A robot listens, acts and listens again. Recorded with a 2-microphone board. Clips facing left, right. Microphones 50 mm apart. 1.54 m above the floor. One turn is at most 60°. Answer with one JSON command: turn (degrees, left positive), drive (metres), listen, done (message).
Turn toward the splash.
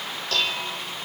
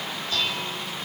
{"listen": true}
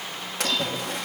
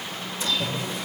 {"turn": 60}
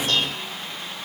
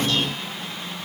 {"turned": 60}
{"listen": true}
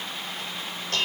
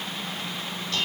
{"done": "I heard a splash, but can't make it out now. It was about 10° left or 50° left."}